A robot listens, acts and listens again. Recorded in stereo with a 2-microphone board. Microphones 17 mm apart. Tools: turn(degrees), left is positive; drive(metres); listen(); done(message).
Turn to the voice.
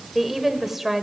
turn(degrees=-30)
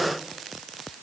listen()
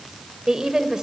turn(degrees=-140)
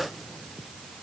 listen()
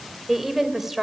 turn(degrees=-15)
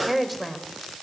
done("Found it: a woman speaking, straight ahead, 2 to 4 m away.")